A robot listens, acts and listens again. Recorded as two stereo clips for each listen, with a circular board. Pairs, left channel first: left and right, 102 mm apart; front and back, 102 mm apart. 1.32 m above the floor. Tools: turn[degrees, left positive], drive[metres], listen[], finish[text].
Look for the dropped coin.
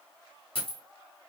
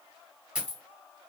Thought: The dropped coin: 100° left.
Action: turn[100]
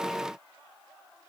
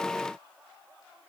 Action: finish[I heard a dropped coin from this way, but can't make it out now.]